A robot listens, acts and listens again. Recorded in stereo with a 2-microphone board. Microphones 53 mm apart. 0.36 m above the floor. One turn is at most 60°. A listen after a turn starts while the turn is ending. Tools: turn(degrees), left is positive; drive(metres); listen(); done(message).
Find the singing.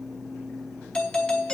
listen()
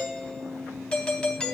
listen()
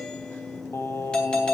turn(degrees=55)
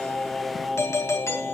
done("Found it: singing, straight ahead.")